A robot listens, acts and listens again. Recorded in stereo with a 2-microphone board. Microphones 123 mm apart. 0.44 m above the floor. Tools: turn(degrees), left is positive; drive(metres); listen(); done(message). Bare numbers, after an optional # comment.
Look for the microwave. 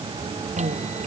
# The microwave: about 70° right or 110° right.
turn(-70)
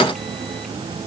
listen()
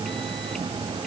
listen()
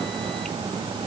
done("I heard a microwave, but can't make it out now. It was about straight ahead or 40° right.")